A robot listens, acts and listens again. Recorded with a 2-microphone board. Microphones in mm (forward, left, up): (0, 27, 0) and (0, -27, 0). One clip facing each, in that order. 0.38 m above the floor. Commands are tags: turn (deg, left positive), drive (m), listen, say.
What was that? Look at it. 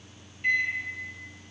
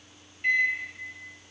<turn deg="-30"/>
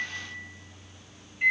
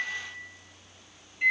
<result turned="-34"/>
<turn deg="15"/>
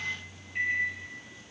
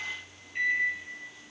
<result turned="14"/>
<say>Facing the microwave.</say>